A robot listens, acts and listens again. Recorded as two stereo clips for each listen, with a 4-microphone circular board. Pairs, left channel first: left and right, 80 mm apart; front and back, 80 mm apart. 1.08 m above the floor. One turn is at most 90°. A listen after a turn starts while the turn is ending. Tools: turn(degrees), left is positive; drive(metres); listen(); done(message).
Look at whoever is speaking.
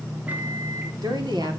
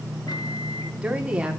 turn(degrees=-90)
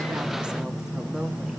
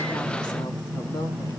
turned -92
done("Facing the woman speaking, 2 to 4 m away.")